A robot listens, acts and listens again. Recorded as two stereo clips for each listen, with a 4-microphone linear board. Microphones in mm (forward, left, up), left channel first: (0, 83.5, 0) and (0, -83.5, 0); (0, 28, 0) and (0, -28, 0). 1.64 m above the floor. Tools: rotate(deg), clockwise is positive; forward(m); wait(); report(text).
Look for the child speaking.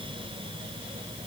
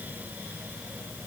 wait()
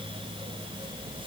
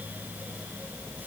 wait()
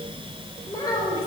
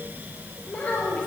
rotate(-25)
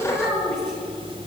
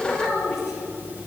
report("Found it: a child speaking, straight ahead, over 4 m away.")